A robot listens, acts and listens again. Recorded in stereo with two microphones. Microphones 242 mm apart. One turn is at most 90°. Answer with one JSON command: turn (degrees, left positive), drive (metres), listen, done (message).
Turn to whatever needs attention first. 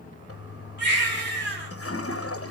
{"turn": 45}
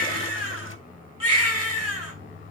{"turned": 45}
{"turn": 90}
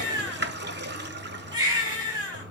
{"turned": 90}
{"turn": -15}
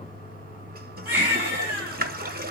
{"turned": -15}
{"turn": -10}
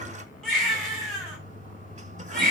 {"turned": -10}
{"done": "Found it: a baby crying, straight ahead, over 4 m away."}